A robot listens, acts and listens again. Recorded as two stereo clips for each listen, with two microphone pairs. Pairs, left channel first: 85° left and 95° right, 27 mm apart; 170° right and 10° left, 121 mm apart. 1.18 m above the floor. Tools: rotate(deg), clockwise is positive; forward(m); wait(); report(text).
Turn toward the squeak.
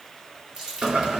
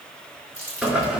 wait()
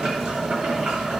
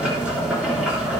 wait()
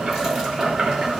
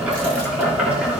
report("I can't make out a squeak to turn to.")